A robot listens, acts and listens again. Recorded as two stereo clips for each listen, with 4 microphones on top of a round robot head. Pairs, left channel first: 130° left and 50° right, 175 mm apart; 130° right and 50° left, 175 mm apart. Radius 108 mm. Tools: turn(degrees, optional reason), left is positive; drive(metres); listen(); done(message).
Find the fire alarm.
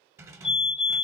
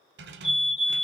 turn(degrees=-175, reason="The fire alarm: 175° right.")
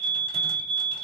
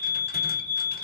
turn(degrees=-10, reason="The fire alarm is now 10° right.")
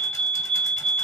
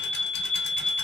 done("Facing the fire alarm, 2 to 4 m away.")